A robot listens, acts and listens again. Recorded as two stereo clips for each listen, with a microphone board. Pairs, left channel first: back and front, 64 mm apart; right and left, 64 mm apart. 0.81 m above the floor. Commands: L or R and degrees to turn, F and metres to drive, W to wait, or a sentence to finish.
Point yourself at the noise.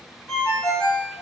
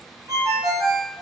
L115
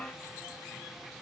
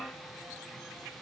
W
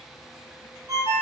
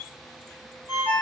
L35
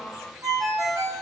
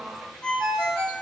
R10
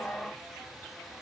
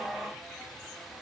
W
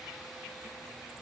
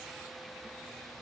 W
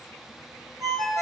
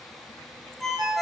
Facing the ringtone.